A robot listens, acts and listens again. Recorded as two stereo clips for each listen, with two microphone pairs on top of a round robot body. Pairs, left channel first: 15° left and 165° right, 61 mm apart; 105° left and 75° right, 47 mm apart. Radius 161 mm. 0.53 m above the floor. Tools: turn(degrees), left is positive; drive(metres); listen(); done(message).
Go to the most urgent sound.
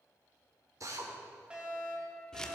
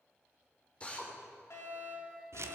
turn(degrees=125)
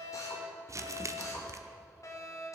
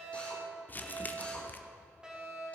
turn(degrees=-10)
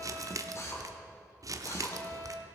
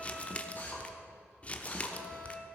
drive(metres=1.0)
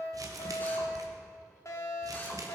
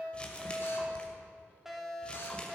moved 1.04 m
drive(metres=1.0)
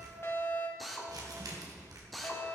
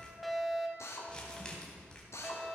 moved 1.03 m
drive(metres=1.0)
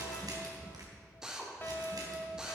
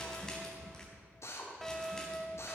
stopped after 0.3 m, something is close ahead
turn(degrees=10)
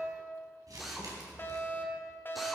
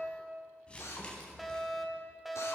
done("I am next to the fire alarm.")